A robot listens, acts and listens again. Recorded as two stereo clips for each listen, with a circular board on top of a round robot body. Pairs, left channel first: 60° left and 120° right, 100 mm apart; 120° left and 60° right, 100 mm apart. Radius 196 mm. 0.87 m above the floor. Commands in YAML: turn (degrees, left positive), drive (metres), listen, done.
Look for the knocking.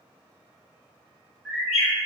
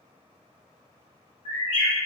listen: true
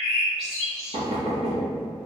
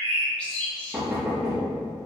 turn: -140
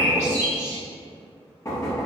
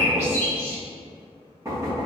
done: "Found it: knocking, straight ahead."